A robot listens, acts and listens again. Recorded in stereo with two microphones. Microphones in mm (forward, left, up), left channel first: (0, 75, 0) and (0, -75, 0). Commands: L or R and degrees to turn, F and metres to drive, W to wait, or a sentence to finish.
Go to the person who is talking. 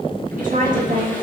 R65
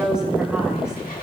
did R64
F1.0
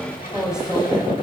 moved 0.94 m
F1.0
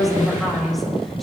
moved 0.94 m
F1.0
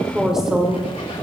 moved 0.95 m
F1.0
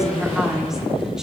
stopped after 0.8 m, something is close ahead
Arrived at the woman speaking, straight ahead.